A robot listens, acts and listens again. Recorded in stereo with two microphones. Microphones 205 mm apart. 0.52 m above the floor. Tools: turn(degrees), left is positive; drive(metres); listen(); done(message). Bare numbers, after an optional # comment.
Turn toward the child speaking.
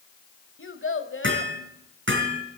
turn(90)
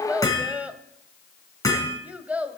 done("Facing the child speaking, 1 to 2 m away.")